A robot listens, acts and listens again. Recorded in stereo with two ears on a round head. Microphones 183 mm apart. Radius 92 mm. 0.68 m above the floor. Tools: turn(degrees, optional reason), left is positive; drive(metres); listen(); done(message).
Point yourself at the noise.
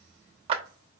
turn(degrees=-30, reason="The clap: about 30° right or 150° right.")
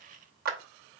turn(degrees=-115, reason="So it is at 115° right.")
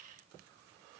listen()
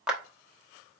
done("Found it: a clap, straight ahead.")